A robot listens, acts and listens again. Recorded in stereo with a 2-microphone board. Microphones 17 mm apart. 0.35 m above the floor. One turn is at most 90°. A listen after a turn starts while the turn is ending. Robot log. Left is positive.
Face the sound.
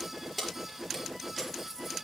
cmd yaw +30
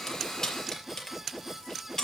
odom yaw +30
note: So it is at 145° left.
cmd yaw +90
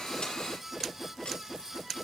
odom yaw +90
note: Nothing new. It was at 55° left.
cmd yaw +55
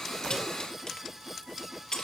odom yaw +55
note: The keys jangling is now 50° left.
cmd yaw +50
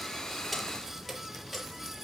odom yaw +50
cmd idle
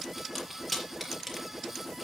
end: Found it: keys jangling, straight ahead, over 4 m away.